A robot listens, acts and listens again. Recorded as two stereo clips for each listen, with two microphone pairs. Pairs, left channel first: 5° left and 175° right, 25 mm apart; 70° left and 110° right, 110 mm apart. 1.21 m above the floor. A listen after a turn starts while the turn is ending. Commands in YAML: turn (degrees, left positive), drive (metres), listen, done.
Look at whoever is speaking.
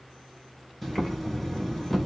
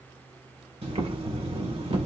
listen: true
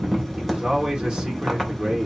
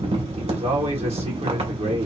turn: -125
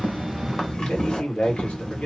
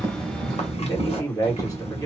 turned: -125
turn: 15
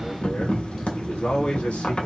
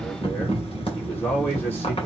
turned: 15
done: "Found it: a man speaking, straight ahead."